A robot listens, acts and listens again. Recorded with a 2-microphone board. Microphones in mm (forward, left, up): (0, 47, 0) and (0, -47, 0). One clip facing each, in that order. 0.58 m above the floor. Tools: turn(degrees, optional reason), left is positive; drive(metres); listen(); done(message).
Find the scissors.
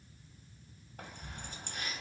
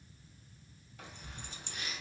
listen()
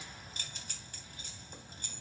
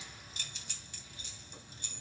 listen()
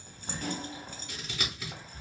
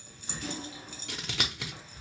turn(degrees=-90)
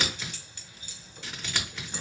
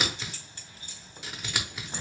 turn(degrees=-10, reason="So it is at 10° right.")
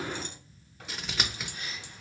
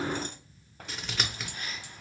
done("Found it: scissors, straight ahead.")